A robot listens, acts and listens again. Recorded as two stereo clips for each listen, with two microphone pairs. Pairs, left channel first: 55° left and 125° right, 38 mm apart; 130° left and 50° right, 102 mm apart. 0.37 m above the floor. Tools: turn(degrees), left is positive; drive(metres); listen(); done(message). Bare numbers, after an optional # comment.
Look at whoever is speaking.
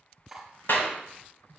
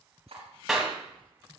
listen()
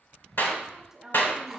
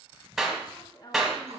# The woman speaking: 165° left.
turn(165)
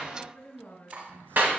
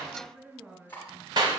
# The woman speaking is now 40° left.
turn(40)
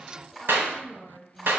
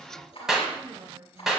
# The woman speaking is now 10° right.
turn(-10)
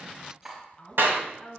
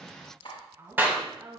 done("Found it: a woman speaking, straight ahead, 1 to 2 m away.")